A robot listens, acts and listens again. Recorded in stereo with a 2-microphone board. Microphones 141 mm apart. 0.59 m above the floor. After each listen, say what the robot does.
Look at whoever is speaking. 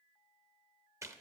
Keep listening.
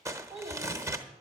Turn 45° right.
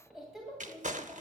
Facing the child speaking, 2 to 4 m away.